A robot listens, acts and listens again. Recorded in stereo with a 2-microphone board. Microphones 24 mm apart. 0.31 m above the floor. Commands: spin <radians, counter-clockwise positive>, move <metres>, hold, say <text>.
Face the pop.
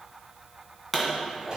spin 0.52
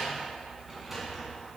hold
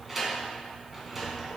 say I heard a pop, but can't make it out now. It was about 30° right or 150° left.